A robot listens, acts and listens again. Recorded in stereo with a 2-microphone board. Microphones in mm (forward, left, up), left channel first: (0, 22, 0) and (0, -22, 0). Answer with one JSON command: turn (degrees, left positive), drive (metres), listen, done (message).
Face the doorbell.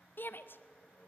{"listen": true}
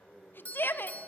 {"turn": 35}
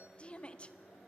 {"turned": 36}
{"listen": true}
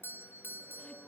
{"turn": 100}
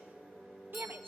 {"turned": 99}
{"listen": true}
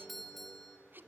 {"done": "Facing the doorbell."}